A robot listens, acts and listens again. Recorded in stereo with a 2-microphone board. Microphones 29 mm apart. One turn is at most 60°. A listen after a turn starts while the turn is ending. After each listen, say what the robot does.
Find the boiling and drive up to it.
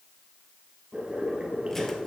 Turn 40° right.
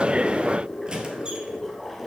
Drive 1.0 m forward.
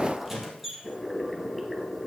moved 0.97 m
Turn 10° right.
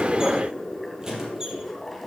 Drive 1.0 m forward.
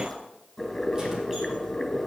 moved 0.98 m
Drive 1.0 m forward.
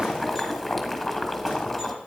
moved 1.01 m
Drive 1.0 m forward.
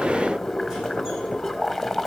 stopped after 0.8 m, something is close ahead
Arrived at the boiling, straight ahead.